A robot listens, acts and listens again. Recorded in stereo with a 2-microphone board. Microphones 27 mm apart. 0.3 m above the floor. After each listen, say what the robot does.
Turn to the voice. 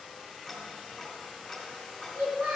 Turn 70° right.
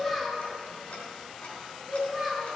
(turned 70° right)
Found it: a child speaking, straight ahead, 2 to 4 m away.